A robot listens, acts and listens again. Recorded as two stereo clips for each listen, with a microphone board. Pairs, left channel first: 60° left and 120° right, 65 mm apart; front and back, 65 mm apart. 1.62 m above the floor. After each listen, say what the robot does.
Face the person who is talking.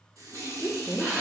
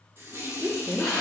Turn 115° left.
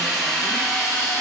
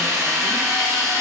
Keep listening.
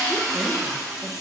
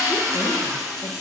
Keep listening.
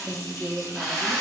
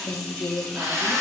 Turn 30° right.
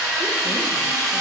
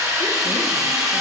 Keep listening.
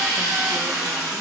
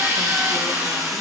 Keep listening.
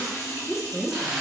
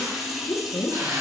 Turn 15° right.
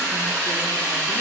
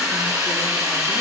Keep listening.
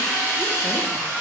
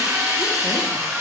Keep listening.
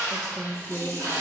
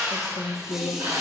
Facing the woman speaking.